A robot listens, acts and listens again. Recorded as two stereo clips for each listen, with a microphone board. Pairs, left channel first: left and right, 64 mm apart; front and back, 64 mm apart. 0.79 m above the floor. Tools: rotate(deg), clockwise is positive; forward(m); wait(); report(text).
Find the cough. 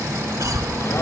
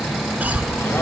rotate(115)
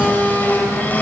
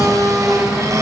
wait()
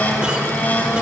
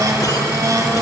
wait()
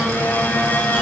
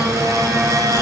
report("I heard a cough from this way, but can't make it out now.")